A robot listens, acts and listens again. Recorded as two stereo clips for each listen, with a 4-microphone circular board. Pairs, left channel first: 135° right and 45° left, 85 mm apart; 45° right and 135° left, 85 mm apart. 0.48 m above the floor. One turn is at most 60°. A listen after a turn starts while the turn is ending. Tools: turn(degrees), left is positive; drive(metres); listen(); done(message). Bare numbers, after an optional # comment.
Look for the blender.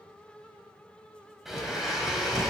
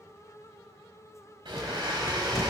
# The blender: 130° left.
turn(60)
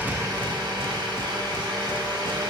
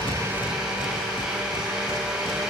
# The blender is now 55° left.
turn(55)
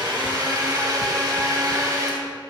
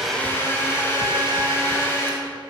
# The blender is now 10° left.
turn(10)
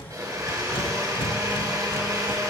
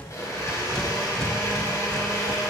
done("Facing the blender.")